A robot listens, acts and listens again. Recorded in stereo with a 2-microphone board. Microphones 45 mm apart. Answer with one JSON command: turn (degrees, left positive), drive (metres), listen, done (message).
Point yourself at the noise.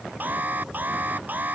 {"turn": -40}
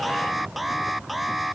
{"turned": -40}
{"done": "Facing the alarm."}